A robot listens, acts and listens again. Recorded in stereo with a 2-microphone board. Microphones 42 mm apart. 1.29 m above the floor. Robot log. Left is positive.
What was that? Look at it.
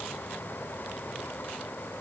cmd idle
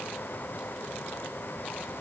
cmd idle
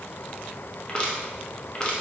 note: The crushing: about 25° left or 155° left.
cmd yaw +25
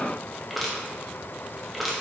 end: Facing the crushing, under 1 m away.